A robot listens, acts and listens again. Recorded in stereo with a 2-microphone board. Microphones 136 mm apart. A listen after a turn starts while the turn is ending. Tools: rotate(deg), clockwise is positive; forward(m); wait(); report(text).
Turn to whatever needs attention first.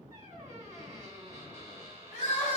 rotate(-60)
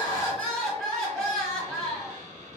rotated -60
report("Found it: crying, straight ahead.")